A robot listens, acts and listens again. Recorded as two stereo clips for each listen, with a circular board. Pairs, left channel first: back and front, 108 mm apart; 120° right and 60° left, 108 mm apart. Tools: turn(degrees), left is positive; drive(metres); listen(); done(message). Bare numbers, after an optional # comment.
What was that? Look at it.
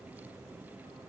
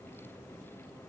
listen()
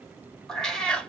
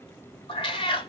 # The cat meowing: 105° right.
turn(-105)
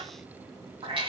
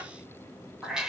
# The cat meowing is now 25° right.
turn(-25)
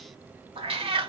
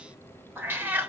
# The cat meowing is now 15° right.
turn(-15)
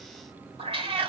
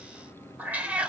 # The cat meowing is now 15° right.
turn(-15)
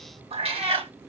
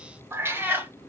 # The cat meowing is now 10° right.
turn(-10)
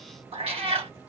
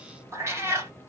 done("Found it: a cat meowing, straight ahead.")